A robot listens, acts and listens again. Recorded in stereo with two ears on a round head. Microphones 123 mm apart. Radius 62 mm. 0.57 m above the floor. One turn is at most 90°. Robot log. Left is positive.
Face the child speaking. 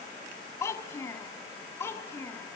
note: The child speaking: about 20° left or 160° left.
cmd yaw +20
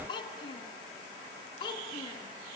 note: The child speaking: about 35° left or 145° left.
cmd yaw +35
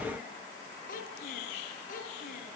note: So it is at 110° left.
cmd yaw +90
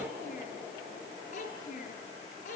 note: The child speaking is now 55° left.
cmd yaw +55
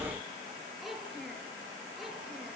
end: Found it: a child speaking, straight ahead.